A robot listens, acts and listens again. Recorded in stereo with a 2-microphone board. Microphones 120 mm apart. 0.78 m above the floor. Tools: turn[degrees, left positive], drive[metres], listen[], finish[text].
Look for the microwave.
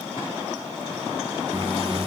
Thought: The microwave: about 20° right or 160° right.
Action: turn[-20]
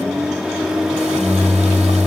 Action: finish[Facing the microwave.]